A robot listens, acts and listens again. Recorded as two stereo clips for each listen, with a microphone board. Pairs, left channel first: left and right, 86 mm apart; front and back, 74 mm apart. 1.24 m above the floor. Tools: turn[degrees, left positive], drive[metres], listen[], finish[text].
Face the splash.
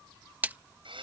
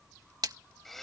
Thought: The splash: 160° right.
Action: turn[-160]
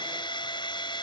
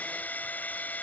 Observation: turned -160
Action: finish[I heard a splash from this way, but can't make it out now.]